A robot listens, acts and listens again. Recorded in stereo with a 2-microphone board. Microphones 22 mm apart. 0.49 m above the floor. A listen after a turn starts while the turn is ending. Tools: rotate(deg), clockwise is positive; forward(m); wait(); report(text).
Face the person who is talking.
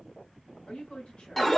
rotate(-60)
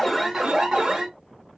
wait()
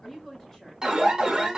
rotate(-20)
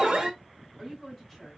report("Facing the woman speaking.")